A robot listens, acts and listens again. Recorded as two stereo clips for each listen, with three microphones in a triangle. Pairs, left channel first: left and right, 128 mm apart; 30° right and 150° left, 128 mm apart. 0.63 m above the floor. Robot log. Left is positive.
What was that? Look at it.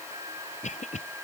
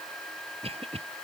note: The cough: 110° left.
cmd yaw +110
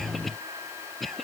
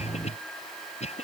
end: Found it: a cough, straight ahead.